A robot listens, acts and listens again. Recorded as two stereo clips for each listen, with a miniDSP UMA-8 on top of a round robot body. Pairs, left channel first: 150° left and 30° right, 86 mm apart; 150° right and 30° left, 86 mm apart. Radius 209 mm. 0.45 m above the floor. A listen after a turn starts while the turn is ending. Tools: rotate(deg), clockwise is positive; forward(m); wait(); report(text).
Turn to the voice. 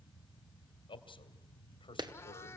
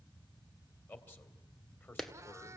rotate(-145)
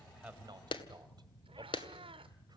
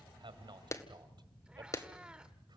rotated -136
rotate(-10)
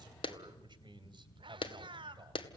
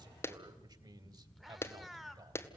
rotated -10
report("Facing the man speaking.")